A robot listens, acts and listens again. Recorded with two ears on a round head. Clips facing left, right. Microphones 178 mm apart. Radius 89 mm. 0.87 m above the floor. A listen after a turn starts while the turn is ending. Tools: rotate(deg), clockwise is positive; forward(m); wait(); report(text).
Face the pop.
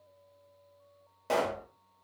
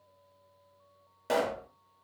rotate(30)
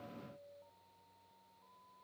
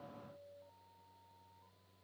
wait()
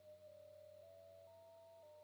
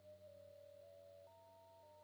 report("I heard a pop, but can't make it out now. It was about 15° left or 135° right.")